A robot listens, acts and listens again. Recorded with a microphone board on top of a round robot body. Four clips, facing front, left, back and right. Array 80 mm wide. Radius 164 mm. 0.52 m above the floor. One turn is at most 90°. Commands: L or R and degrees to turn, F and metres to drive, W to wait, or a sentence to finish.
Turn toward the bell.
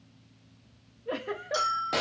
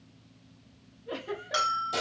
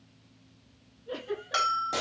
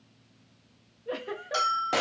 L90
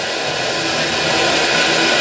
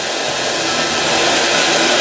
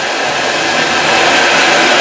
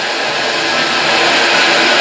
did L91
L70
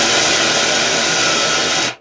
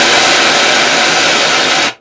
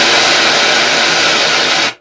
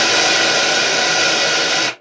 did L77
W
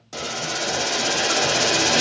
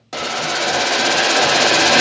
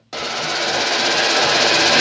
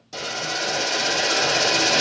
Facing where the bell came from. I can't hear it now.